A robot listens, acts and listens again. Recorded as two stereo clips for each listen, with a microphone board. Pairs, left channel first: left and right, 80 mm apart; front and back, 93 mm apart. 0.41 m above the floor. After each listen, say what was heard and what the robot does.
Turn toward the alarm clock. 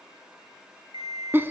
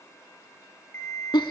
The alarm clock: 65° right. Turn 65° right.
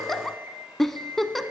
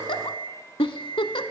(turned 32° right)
The alarm clock is now 30° right. Turn 30° right.
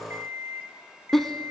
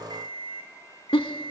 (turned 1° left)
The alarm clock is now 30° right. Turn 30° right.
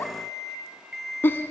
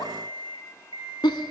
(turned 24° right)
Facing the alarm clock, 2 to 4 m away.